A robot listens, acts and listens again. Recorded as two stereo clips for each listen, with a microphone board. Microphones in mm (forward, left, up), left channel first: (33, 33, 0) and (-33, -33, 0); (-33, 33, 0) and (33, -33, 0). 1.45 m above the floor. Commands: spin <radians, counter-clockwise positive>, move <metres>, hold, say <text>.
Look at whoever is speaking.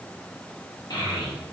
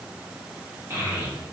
spin 0.26
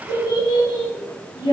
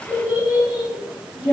spin 0.79
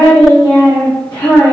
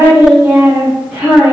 spin 0.52
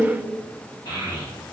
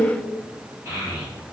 spin 0.26
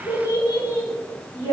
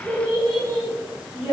say Found it: a child speaking, straight ahead.